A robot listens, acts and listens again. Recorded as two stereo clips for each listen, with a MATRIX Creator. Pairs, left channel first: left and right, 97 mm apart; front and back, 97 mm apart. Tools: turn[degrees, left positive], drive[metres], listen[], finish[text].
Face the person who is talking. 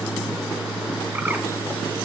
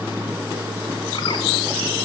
Action: listen[]
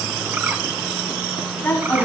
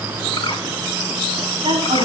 Thought: The woman speaking: 160° left.
Action: turn[160]
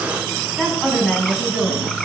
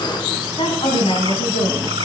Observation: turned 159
Action: finish[Found it: a woman speaking, straight ahead, 2 to 4 m away.]